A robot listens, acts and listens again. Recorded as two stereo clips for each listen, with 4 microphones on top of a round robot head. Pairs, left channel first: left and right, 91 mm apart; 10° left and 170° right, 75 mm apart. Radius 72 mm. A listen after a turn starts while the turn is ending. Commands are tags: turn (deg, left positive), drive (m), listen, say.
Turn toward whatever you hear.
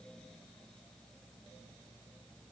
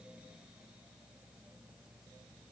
<listen/>
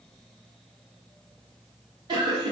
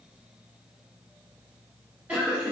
<turn deg="-95"/>
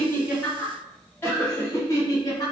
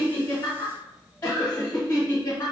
<turn deg="50"/>
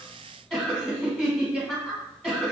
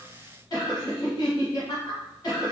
<say>Facing the laughter, 1 to 2 m away.</say>